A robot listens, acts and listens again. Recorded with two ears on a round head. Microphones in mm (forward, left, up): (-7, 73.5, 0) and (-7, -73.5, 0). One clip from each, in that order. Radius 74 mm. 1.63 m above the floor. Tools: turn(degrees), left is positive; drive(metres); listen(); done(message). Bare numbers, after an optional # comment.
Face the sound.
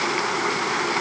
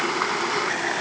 listen()
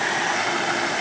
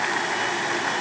listen()
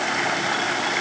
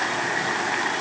done("I can't make out anything.")